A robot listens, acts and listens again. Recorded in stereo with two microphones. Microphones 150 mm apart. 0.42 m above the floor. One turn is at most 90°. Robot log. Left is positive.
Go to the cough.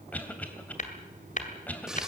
cmd yaw +30
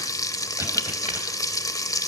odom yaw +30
cmd idle
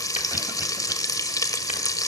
cmd idle
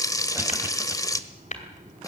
end: I heard a cough, but can't make it out now. It was about 20° right or 140° left. I did not reach it.